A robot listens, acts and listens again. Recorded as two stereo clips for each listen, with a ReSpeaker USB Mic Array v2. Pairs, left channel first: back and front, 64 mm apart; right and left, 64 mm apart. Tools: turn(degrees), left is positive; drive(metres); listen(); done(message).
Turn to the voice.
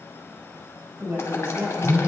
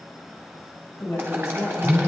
turn(degrees=-50)
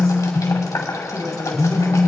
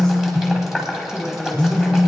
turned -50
turn(degrees=-10)
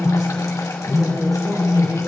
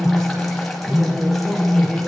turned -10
listen()
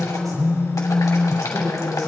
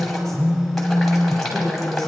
done("Found it: a woman speaking, straight ahead, over 4 m away.")